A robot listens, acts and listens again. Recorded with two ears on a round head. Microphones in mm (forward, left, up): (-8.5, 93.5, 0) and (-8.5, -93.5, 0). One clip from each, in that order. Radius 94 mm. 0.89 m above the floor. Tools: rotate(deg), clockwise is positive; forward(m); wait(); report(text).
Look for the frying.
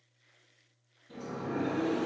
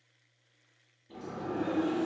wait()
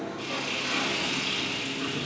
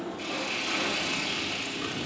rotate(-30)
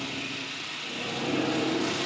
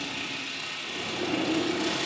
rotate(25)
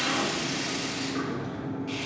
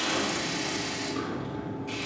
wait()
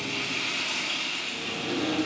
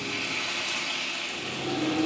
report("Found it: frying, straight ahead, 2 to 4 m away.")